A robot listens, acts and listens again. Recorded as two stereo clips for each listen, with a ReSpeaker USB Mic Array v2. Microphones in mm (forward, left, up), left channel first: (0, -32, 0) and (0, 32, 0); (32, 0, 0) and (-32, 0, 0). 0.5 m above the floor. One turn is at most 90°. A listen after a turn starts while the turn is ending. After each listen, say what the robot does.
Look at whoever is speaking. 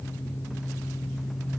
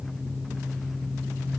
Keep listening.
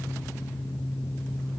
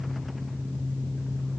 Keep listening.
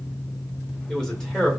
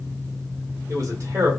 Turn 90° right.
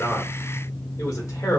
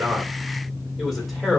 Turn 90° right.
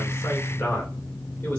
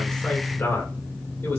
Turn 40° right.
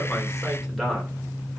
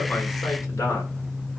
Found it: a man speaking, straight ahead, 1 to 2 m away.